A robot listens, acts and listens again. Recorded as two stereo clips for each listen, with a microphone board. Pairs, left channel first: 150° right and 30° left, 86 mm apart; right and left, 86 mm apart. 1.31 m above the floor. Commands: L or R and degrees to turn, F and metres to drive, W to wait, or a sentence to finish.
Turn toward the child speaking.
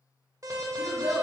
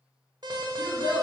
R40
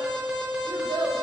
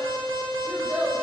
L25
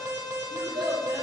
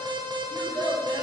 L15
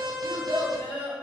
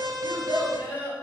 L20
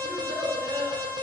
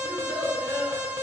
L20
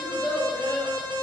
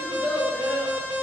L10
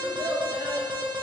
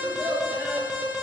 Found it: a child speaking, straight ahead.